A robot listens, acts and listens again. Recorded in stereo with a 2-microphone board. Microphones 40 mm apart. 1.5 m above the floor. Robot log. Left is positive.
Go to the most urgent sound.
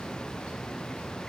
cmd idle
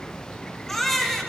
cmd yaw +30
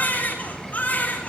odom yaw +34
note: So it is at 140° left.
cmd yaw +140
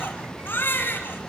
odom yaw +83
note: The baby crying is now 55° left.
cmd yaw +55
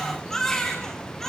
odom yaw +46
note: The baby crying is now 10° left.
cmd yaw +10
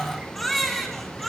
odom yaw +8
cmd fwd 1.0
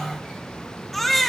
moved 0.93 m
cmd fwd 1.0
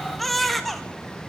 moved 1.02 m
cmd fwd 1.0
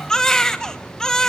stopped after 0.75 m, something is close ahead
note: The baby crying is now 15° left.
cmd yaw +15
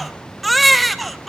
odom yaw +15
end: Arrived at the baby crying, straight ahead.